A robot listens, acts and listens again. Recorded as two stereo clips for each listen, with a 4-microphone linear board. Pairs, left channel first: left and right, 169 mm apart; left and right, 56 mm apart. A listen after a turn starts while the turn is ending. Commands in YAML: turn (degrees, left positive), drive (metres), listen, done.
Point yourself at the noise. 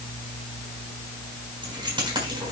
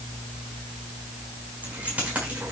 turn: -25
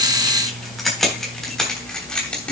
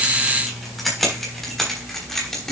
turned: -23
turn: 10
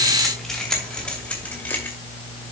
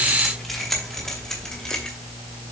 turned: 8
turn: 10
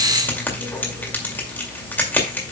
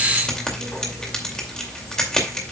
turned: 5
turn: 10
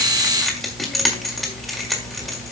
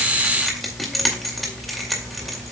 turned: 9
done: "Found it: keys jangling, straight ahead, 2 to 4 m away."